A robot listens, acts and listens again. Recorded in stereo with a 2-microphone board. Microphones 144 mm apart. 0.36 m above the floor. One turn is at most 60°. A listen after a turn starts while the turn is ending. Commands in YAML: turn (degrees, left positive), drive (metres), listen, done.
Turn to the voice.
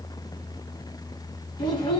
turn: 30
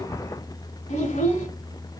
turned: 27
turn: 60
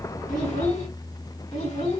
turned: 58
turn: 60
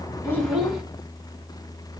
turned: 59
done: "Found it: a child speaking, straight ahead, 1 to 2 m away."